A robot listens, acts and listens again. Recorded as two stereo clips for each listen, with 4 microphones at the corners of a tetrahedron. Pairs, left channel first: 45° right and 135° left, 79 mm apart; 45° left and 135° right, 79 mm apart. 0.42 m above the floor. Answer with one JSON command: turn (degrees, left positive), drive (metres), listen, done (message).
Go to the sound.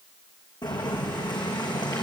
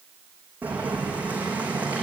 {"turn": -65}
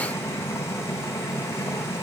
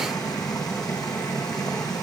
{"turn": 10}
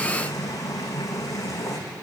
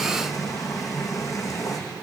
{"drive": 1.0}
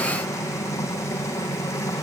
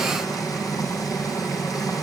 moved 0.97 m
{"drive": 1.0}
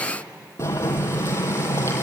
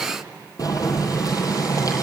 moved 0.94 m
{"turn": 10}
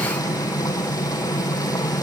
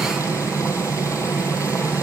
{"drive": 1.0}
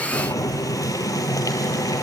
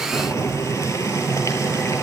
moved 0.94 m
{"drive": 1.0}
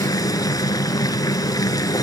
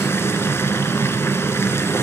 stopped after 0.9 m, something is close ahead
{"turn": -10}
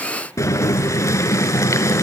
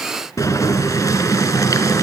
{"done": "Arrived at the boiling, straight ahead."}